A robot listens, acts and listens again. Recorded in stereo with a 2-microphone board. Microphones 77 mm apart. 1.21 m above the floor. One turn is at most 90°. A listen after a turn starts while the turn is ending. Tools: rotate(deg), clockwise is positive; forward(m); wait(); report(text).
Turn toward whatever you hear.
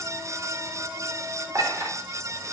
rotate(35)
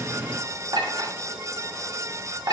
rotate(90)
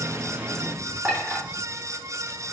rotate(20)
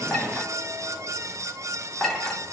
report("Facing the clink, 1 to 2 m away.")